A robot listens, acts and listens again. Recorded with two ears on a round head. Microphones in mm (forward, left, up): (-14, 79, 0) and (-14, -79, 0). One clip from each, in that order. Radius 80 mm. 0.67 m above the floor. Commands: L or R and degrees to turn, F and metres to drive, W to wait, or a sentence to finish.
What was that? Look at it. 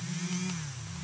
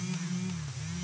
W
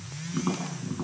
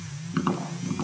R60
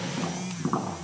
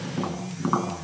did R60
R60
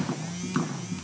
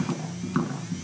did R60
Facing the tapping.